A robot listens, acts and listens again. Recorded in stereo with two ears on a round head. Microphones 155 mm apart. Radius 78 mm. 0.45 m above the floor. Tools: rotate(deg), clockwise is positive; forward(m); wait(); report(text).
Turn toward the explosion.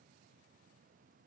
wait()
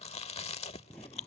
rotate(-30)
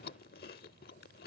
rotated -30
wait()
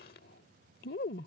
report("I heard an explosion, but can't make it out now. It was about 20° right or 140° left.")